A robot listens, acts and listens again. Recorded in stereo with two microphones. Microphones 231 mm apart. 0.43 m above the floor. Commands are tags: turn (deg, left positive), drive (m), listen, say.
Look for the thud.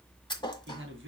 <turn deg="20"/>
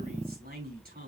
<listen/>
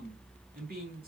<say>I heard a thud, but can't make it out now. It was about straight ahead or 140° left.</say>